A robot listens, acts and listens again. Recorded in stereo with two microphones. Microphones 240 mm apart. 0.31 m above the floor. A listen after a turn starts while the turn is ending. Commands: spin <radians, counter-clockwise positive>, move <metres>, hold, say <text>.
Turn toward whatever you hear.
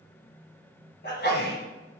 spin 0.79
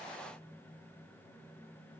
hold
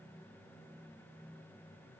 say I heard a sneeze, but can't make it out now. It was about straight ahead or 90° left.